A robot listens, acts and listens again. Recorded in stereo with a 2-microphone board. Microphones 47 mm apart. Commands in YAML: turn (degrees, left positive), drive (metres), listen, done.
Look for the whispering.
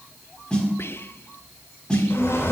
turn: 55
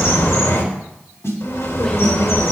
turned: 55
listen: true
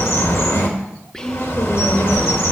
turn: 15
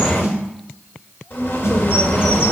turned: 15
listen: true
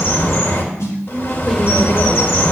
listen: true
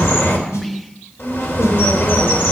done: "I heard whispering from this way, but can't make it out now."